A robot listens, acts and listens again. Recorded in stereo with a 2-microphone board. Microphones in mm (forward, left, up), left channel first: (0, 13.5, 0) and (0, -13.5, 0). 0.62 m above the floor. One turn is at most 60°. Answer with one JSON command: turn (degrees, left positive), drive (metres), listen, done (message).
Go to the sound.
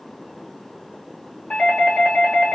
{"turn": 35}
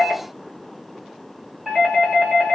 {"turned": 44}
{"drive": 1.0}
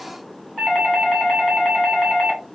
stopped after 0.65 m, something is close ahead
{"done": "Arrived at the doorbell, straight ahead."}